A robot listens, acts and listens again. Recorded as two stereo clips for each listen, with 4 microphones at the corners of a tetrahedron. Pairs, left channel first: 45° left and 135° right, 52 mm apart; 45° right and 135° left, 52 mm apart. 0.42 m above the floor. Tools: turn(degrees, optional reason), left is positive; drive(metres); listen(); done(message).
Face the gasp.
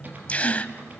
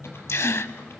turn(degrees=-15, reason="The gasp: 15° right.")
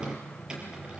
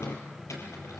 done("I heard a gasp from this way, but can't make it out now.")